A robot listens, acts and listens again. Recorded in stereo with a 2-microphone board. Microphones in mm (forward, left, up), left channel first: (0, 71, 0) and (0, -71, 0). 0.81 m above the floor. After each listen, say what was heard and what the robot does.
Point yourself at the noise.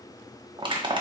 The crushing: about 35° right or 145° right. Turn 35° right.
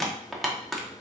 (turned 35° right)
Facing the crushing.